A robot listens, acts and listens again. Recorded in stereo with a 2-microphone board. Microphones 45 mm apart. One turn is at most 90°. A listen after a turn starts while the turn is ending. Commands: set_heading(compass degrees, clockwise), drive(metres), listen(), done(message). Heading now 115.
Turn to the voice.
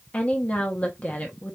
set_heading(80)
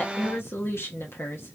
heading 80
set_heading(350)
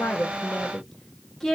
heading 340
set_heading(330)
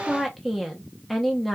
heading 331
done("Facing the woman speaking.")